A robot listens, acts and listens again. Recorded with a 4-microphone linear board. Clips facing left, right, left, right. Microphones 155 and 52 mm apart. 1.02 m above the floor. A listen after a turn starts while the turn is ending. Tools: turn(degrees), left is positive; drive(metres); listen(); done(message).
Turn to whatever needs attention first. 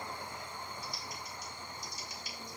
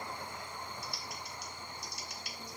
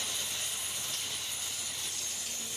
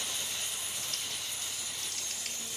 listen()
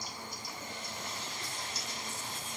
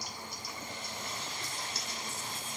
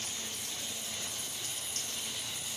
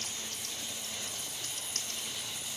listen()
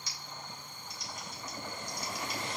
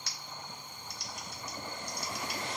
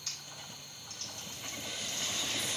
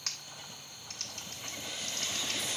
done("I can't make out anything urgent, only typing on a keyboard.")